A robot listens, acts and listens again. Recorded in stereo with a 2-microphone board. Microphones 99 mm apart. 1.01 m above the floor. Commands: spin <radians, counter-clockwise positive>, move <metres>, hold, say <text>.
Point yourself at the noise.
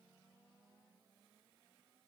hold
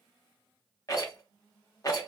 spin 0.70
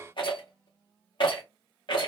spin 1.66
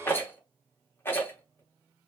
spin 0.44
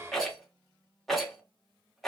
say Facing the rattle.